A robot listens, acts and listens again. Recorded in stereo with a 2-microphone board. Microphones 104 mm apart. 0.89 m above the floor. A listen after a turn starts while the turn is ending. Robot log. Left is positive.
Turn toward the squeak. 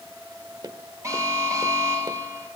cmd idle
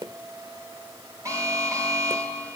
cmd idle
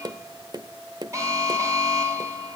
end: I can't make out a squeak, only an alarm and tapping.